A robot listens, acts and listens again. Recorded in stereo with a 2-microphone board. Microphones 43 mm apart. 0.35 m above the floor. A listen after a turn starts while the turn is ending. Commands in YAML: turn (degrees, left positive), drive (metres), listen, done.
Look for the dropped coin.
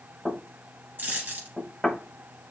turn: -45
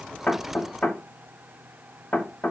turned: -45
listen: true
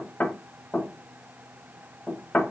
done: "I heard a dropped coin, but can't make it out now. It was about straight ahead or 90° right."